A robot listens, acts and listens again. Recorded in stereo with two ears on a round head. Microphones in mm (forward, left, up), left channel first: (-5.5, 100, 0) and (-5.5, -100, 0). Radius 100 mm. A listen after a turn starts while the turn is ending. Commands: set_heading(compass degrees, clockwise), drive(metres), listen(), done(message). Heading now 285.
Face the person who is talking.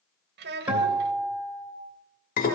set_heading(330)
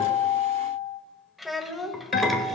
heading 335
done("Facing the child speaking, 1 to 2 m away.")